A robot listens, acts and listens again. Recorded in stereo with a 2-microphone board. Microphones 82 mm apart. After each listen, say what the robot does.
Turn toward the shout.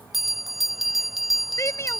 Turn 35° left.
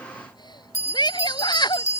Turn 110° left.
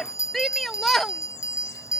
Found it: a shout, straight ahead.